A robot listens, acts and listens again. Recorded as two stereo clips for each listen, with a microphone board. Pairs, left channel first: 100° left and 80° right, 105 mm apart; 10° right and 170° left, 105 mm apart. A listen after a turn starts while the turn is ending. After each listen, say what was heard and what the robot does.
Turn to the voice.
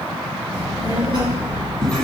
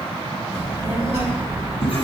The child speaking: 150° left. Turn 150° left.
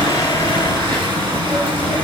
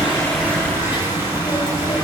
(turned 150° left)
The child speaking is now 25° left. Turn 25° left.
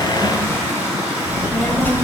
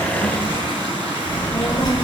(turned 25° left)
The child speaking is now 35° left. Turn 35° left.
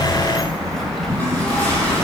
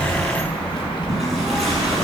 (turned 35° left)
The child speaking is now 15° left. Turn 15° left.
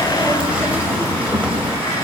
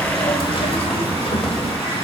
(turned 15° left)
Facing the child speaking, 1 to 2 m away.